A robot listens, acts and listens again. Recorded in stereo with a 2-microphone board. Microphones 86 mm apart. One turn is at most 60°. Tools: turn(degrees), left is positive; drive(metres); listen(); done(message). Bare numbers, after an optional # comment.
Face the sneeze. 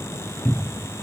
listen()
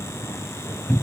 listen()
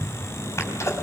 # The sneeze: about 35° left or 145° left.
turn(35)
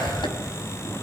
# So it is at 110° left.
turn(60)
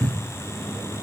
# Nothing new. It was at 50° left.
turn(50)
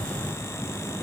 done("Facing where the sneeze came from. I can't hear it now.")